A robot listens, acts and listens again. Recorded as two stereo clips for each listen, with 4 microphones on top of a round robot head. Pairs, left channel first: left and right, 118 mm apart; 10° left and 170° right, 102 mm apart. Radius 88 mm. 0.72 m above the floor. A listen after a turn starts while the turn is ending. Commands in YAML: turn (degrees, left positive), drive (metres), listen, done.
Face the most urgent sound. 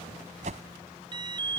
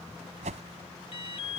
turn: -40
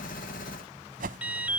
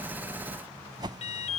turn: -10
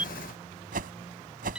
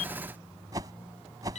turn: -10
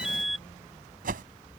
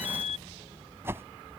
done: "Facing the alarm."